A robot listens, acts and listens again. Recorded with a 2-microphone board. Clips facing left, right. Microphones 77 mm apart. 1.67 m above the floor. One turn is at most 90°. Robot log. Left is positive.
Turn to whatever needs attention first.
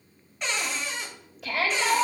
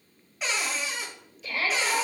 cmd yaw +90
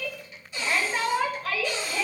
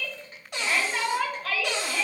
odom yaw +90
end: Facing the shout.